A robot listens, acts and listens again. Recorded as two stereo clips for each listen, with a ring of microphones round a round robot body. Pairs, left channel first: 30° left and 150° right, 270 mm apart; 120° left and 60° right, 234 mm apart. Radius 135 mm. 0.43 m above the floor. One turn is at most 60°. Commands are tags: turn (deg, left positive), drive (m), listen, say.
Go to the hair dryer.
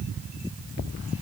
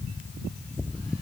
<listen/>
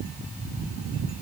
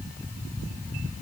<listen/>
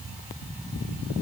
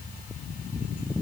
<say>I can't make out a hair dryer.</say>